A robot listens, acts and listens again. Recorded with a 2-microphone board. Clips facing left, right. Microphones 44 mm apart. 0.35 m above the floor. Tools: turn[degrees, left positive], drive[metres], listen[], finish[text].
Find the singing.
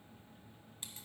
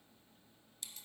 Action: listen[]
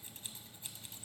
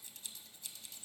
Action: listen[]
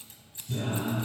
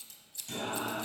Thought: The singing: about 65° right or 115° right.
Action: turn[-65]
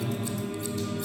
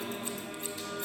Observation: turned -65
Action: finish[Found it: singing, straight ahead, 2 to 4 m away.]